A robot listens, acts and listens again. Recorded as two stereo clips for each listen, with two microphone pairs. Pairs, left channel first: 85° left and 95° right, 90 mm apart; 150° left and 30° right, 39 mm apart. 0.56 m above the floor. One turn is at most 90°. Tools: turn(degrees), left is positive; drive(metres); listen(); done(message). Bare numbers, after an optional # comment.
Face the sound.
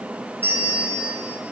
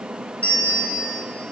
# The bell: 160° right.
turn(-90)
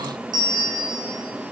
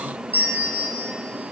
# The bell is now 65° right.
turn(-65)
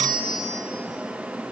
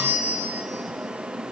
done("Found it: a bell, straight ahead.")